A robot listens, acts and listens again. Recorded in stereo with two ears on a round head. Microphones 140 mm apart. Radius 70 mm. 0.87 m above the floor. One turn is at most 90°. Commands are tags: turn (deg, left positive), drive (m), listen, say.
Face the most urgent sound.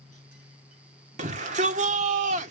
<turn deg="-50"/>
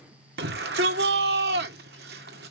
<turn deg="-80"/>
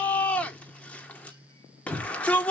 <turn deg="10"/>
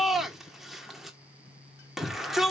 <say>Found it: a shout, straight ahead.</say>